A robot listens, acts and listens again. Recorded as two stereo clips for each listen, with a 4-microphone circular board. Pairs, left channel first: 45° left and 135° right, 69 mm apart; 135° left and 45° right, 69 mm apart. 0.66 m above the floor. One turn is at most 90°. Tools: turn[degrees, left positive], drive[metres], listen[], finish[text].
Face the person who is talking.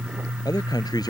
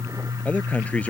Thought: The man speaking: 65° left.
Action: turn[65]
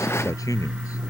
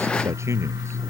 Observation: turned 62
Action: finish[Facing the man speaking.]